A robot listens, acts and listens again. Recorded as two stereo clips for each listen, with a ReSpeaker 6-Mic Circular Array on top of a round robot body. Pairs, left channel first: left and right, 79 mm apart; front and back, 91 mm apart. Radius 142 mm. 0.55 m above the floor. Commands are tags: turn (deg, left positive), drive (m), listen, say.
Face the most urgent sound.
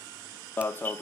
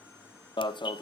<turn deg="25"/>
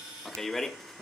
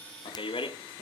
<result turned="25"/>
<say>Facing the alarm.</say>